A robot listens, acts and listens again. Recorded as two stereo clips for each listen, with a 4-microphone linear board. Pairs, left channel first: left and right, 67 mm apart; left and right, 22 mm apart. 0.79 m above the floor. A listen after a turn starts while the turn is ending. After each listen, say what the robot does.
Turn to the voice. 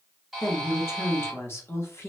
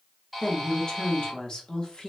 Turn 40° left.
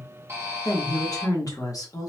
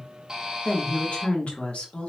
Turn 95° left.
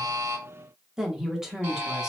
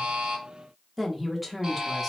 Turn 10° right.
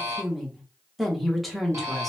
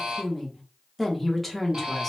Facing the woman speaking, under 1 m away.